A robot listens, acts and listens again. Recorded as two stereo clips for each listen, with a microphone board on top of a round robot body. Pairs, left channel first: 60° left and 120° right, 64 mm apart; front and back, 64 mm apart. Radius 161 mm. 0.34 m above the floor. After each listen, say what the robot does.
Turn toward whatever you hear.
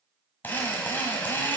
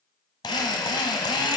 Found it: a drill, straight ahead, 1 to 2 m away.